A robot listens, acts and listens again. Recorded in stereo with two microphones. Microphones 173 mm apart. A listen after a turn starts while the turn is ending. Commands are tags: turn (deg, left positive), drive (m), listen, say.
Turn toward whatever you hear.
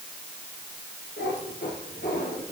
<turn deg="90"/>
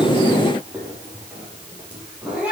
<say>Facing the cat meowing.</say>